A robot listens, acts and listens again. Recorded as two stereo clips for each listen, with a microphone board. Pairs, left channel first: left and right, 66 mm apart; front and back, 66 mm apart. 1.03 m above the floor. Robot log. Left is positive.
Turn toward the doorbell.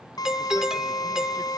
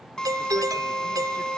note: The doorbell: 170° right.
cmd yaw -170
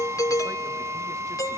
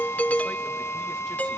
note: The doorbell is now 65° left.
cmd yaw +65
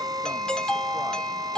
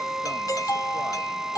note: The doorbell is now 15° left.
cmd yaw +15
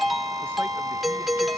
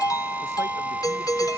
end: Found it: a doorbell, straight ahead.